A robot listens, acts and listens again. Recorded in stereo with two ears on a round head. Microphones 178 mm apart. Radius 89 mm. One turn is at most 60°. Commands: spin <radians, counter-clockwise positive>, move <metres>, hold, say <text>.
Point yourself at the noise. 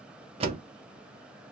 spin -0.52
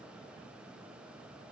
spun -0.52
hold
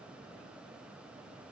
say I heard a door slam, but can't make it out now. It was about straight ahead or 120° right.